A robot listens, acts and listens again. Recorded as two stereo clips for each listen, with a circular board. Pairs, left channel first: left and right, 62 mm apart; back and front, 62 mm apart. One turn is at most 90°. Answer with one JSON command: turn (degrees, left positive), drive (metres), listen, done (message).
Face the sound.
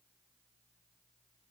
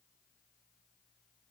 {"listen": true}
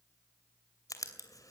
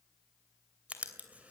{"turn": 65}
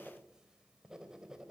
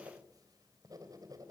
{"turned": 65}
{"turn": -10}
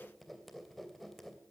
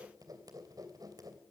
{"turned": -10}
{"done": "Facing the writing, 2 to 4 m away."}